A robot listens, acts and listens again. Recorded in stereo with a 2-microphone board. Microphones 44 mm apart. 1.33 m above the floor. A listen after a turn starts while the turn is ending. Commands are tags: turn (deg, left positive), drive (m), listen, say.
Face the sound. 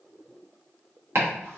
<turn deg="-60"/>
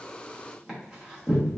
<turn deg="-15"/>
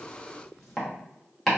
<say>Found it: chopping, straight ahead, 1 to 2 m away.</say>